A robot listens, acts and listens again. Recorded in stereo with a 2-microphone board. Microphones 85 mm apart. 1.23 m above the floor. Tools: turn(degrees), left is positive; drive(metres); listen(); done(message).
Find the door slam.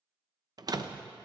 turn(degrees=-50)
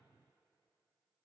listen()
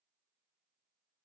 done("I heard a door slam, but can't make it out now. It was about straight ahead or 80° right.")